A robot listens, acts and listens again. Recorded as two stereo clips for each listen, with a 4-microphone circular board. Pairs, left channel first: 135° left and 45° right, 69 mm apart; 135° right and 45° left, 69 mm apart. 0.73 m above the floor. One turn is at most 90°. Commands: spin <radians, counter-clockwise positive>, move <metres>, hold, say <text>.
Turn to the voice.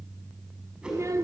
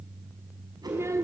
say Facing the child speaking, 1 to 2 m away.